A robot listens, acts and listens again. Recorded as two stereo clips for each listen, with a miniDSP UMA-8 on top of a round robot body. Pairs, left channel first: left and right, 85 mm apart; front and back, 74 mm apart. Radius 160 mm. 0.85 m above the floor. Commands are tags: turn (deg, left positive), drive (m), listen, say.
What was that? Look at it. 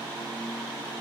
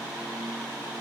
<listen/>
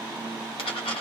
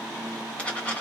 <turn deg="75"/>
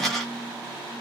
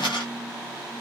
<say>Found it: a dropped coin, straight ahead, 1 to 2 m away.</say>